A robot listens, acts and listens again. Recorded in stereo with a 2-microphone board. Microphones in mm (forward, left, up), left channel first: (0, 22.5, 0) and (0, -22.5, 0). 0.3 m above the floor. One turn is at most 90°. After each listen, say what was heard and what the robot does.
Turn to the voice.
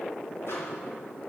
Keep listening.
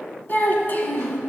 The child speaking: about 45° left or 135° left. Turn 45° left.
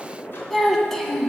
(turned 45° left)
So it is at 10° left. Turn 10° left.
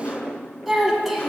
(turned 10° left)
Found it: a child speaking, straight ahead.